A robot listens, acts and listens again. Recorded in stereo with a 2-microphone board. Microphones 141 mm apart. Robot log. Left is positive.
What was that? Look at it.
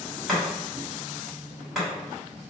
cmd yaw -30
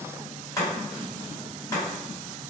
note: So it is at 25° left.
cmd yaw +25
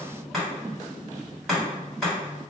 end: Facing the chopping.